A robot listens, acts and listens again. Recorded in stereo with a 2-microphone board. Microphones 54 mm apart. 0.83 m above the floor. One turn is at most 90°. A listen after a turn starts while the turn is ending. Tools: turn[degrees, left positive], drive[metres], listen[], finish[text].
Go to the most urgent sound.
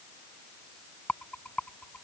Action: listen[]
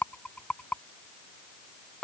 Action: listen[]
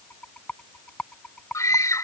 Action: turn[90]
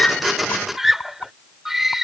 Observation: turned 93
Action: drive[1.0]
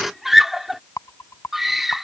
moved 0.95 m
Action: drive[1.0]
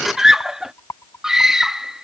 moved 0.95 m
Thought: The scream is now 10° right.
Action: turn[-10]
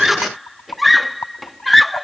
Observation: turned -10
Action: drive[1.0]
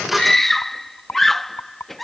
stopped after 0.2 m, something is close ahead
Action: finish[Arrived at the scream, straight ahead.]